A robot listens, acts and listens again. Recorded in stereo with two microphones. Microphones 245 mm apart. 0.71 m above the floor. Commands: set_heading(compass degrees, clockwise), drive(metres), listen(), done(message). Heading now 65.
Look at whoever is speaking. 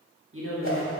set_heading(120)
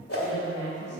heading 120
set_heading(170)
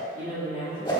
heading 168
set_heading(213)
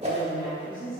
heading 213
set_heading(238)
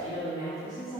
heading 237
done("Facing the woman speaking.")